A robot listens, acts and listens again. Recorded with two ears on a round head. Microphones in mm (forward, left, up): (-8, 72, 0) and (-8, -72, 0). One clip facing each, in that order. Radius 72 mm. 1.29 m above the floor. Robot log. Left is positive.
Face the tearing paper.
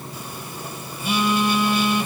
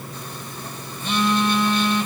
cmd idle
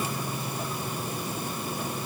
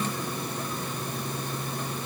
cmd idle
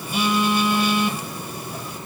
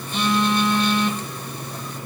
end: I can't make out tearing paper, only a phone buzzing.